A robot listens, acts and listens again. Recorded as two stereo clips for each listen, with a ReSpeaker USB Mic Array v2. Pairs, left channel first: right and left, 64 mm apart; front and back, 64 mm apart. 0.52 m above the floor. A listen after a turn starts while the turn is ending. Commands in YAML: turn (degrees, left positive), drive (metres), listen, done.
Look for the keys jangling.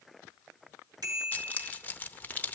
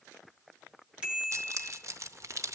turn: -150
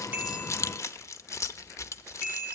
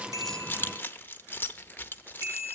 turn: -55
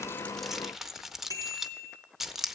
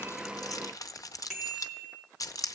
done: "Found it: keys jangling, straight ahead."